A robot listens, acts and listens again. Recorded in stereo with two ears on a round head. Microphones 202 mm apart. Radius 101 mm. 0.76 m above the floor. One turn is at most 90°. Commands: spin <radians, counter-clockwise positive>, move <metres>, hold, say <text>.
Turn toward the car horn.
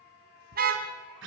spin -0.70
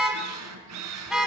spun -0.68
say Found it: a car horn, straight ahead, 2 to 4 m away.